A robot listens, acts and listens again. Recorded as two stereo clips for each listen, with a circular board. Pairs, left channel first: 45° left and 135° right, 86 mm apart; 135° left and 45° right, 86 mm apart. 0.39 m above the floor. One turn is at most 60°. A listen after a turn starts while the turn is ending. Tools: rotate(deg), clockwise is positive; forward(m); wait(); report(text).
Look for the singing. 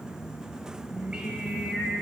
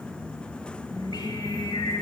rotate(-60)
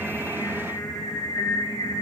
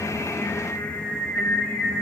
rotate(-50)
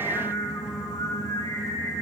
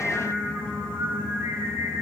report("Found it: singing, straight ahead, 1 to 2 m away.")